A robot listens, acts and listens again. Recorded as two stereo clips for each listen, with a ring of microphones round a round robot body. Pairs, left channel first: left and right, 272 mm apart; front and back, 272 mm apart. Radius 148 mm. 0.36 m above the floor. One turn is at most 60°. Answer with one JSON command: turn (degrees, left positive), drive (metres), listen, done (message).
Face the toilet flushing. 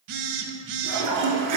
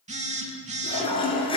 {"turn": -60}
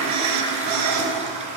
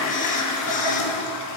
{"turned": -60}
{"turn": -25}
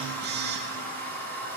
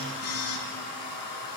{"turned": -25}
{"done": "Facing the toilet flushing."}